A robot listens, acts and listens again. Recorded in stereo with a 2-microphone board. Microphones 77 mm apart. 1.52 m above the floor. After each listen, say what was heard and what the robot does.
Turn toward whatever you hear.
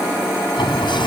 Turn 90° left.
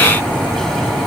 Found it: a sliding door, straight ahead.